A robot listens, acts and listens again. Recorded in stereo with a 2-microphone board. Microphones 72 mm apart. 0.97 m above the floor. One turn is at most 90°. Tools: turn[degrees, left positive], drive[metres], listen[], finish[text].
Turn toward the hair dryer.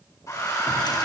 Thought: The hair dryer: about 50° left or 130° left.
Action: turn[50]
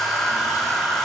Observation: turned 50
Action: finish[Found it: a hair dryer, straight ahead.]